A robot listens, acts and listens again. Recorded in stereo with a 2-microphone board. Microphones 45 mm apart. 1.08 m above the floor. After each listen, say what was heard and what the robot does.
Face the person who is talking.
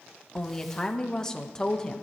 The woman speaking: about 15° left or 165° left. Turn 15° left.
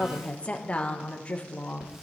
So it is at 150° left. Turn 150° left.
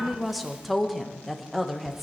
Found it: a woman speaking, straight ahead, under 1 m away.